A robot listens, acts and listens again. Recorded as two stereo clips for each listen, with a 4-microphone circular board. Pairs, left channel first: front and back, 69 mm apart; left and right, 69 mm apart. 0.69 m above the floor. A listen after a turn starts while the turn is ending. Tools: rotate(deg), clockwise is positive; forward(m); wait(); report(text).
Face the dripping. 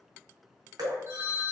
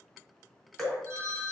rotate(-175)
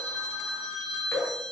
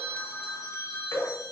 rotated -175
rotate(-50)
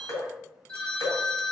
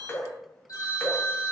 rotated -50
rotate(-25)
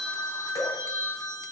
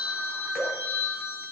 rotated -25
wait()
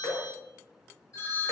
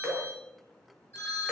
rotate(15)
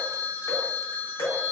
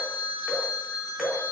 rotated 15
report("Facing the dripping.")